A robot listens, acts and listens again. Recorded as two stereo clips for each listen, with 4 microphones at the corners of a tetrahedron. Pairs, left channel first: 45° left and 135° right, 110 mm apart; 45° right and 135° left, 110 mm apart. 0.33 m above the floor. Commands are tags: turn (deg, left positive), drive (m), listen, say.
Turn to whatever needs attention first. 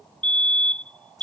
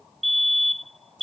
<turn deg="125"/>
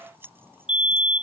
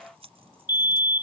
<say>Found it: a fire alarm, straight ahead.</say>